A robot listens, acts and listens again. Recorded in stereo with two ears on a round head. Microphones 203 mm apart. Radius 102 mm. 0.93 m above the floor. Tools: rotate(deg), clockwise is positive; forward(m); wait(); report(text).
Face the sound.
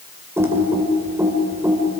rotate(30)
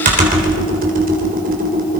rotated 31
rotate(140)
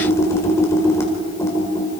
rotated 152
rotate(-10)
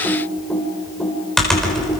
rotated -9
report("Found it: typing on a keyboard, straight ahead.")